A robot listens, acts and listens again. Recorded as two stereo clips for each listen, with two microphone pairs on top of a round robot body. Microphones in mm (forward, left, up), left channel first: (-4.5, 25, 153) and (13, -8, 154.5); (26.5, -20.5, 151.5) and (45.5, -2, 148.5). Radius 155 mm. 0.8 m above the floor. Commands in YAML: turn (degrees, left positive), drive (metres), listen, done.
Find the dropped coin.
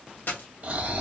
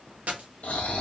turn: 75
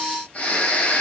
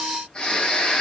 done: "Facing where the dropped coin came from. I can't hear it now."